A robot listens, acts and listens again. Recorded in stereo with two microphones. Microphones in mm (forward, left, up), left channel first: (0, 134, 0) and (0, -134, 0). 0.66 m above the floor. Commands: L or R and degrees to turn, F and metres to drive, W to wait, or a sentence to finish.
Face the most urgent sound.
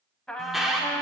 L30
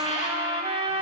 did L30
W
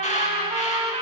W
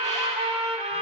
I heard an alarm, but can't make it out now. It was about 30° right or 150° left.